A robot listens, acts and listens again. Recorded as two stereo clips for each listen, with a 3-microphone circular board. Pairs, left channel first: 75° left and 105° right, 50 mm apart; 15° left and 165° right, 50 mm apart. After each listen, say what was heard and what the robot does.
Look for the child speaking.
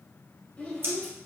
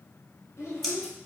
Facing the child speaking.